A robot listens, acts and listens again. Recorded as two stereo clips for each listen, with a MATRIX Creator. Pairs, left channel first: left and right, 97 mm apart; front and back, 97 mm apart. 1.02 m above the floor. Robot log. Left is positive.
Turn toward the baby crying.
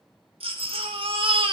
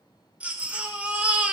note: The baby crying: 105° right.
cmd yaw -105
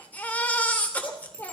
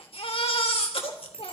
note: The baby crying is now 15° left.
cmd yaw +15
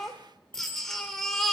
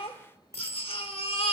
end: Facing the baby crying.